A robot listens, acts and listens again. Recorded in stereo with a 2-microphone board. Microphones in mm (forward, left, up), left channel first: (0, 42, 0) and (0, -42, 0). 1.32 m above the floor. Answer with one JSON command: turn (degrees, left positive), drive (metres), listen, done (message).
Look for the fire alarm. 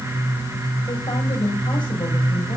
{"listen": true}
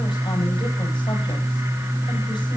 {"listen": true}
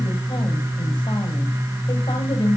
{"done": "I can't make out a fire alarm, only a woman speaking."}